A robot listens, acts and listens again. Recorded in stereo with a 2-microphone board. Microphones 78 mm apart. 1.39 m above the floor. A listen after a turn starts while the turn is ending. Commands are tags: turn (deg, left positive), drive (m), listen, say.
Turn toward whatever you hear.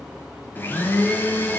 <turn deg="25"/>
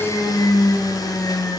<turn deg="130"/>
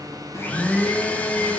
<turn deg="20"/>
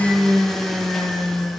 <say>Facing the blender.</say>